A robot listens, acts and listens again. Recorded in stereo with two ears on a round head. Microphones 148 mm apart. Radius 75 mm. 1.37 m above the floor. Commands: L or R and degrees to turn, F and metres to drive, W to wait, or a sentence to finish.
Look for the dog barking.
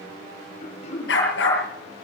L75
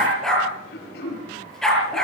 Facing the dog barking.